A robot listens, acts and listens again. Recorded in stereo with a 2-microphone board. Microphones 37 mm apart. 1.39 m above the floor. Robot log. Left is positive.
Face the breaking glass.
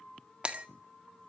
note: The breaking glass: about 35° right or 145° right.
cmd yaw -35
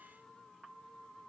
cmd idle
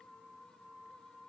end: I heard breaking glass, but can't make it out now. It was about straight ahead or 110° right.